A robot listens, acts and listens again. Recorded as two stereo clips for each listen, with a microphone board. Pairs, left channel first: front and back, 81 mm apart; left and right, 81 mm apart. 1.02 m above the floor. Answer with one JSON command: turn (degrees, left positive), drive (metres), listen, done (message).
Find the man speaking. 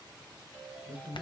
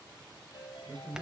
{"turn": -115}
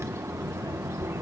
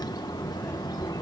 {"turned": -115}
{"listen": true}
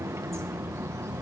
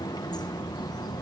{"listen": true}
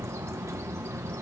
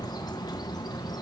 {"done": "Facing where the man speaking came from. I can't hear it now."}